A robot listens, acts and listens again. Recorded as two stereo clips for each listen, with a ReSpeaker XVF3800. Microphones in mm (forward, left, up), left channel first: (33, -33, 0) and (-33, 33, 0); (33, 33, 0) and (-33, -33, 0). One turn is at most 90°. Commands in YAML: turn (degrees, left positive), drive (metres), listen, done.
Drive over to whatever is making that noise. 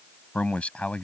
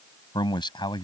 turn: 30
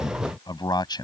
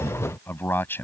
turn: -20
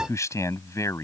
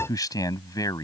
drive: 1.0
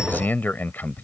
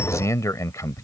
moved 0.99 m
turn: 10
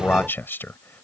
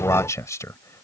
turn: 10
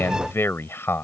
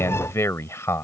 drive: 1.0
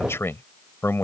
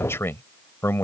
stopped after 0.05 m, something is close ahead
done: "I am next to the man speaking."